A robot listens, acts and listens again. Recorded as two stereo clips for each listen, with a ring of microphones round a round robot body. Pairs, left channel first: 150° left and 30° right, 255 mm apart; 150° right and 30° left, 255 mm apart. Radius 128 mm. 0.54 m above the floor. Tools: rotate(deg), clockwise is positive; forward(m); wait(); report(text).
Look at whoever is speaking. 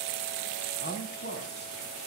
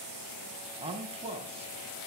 rotate(-100)
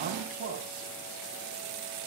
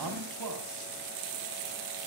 rotate(-30)
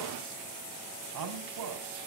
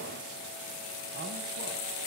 rotate(20)
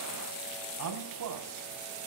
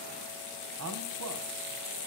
report("Facing the man speaking, 2 to 4 m away.")